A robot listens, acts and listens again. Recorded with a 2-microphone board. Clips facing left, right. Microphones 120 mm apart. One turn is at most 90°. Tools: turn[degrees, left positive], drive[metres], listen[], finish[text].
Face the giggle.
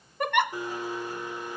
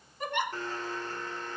Thought: The giggle: about 75° left or 105° left.
Action: turn[75]
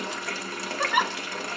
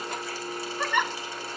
Thought: So it is at 10° left.
Action: turn[10]
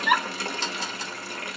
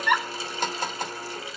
Action: finish[Facing the giggle, 1 to 2 m away.]